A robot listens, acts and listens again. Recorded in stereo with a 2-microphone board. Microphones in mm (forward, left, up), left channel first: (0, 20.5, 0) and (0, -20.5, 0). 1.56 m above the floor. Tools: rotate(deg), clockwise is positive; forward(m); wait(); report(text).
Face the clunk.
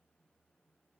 wait()
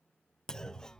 rotate(-30)
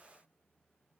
wait()
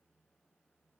report("I heard a clunk, but can't make it out now. It was about 15° right or 135° left.")